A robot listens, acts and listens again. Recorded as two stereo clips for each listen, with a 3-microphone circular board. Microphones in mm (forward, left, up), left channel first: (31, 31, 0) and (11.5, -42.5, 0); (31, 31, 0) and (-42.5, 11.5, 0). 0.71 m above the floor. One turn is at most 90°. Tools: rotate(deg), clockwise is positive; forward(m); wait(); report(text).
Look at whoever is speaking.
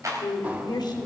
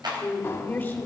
rotate(-80)
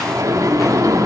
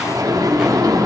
wait()
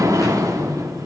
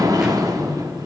wait()
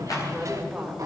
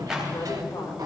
rotate(20)
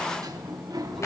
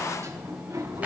wait()
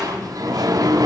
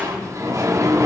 wait()
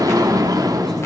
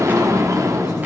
report("I heard a woman speaking from this way, but can't make it out now.")